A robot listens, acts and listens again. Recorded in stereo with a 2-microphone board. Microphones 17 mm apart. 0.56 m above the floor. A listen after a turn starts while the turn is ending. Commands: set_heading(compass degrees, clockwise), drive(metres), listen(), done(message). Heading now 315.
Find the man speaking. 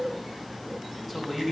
set_heading(345)
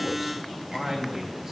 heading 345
set_heading(130)
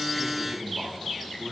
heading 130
set_heading(150)
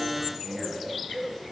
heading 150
listen()
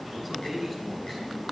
done("Facing the man speaking, over 4 m away.")